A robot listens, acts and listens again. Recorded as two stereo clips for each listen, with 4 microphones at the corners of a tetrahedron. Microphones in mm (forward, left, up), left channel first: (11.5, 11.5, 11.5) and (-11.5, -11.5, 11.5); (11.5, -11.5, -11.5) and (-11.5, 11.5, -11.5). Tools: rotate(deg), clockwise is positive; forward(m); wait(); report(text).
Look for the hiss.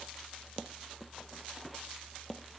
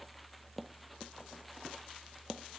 wait()
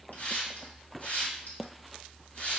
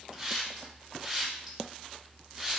rotate(-55)
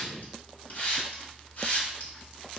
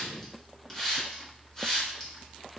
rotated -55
rotate(-20)
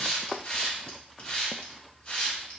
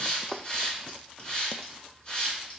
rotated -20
report("Facing the hiss, 1 to 2 m away.")